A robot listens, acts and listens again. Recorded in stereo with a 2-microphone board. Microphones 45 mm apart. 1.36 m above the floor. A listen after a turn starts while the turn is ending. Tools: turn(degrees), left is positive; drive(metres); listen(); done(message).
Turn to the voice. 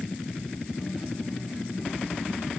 listen()
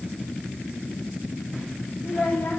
turn(degrees=55)
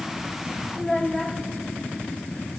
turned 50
done("Found it: a child speaking, straight ahead, 2 to 4 m away.")